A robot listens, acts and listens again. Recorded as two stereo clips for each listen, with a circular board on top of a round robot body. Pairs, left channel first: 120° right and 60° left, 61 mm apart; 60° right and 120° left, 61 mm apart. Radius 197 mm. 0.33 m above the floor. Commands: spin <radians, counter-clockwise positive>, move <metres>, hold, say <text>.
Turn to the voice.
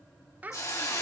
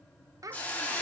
spin 2.09
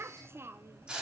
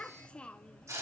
spin 0.26
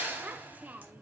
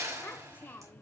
say Facing the child speaking, under 1 m away.